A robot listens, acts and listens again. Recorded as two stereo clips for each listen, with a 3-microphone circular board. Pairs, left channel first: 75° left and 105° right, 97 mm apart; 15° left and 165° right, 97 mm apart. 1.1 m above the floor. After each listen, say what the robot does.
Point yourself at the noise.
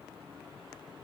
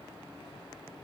Keep listening.
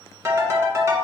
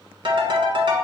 Turn 155° right.
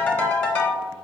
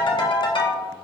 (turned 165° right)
Turn 10° left.
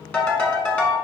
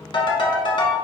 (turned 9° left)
Found it: a ringtone, straight ahead.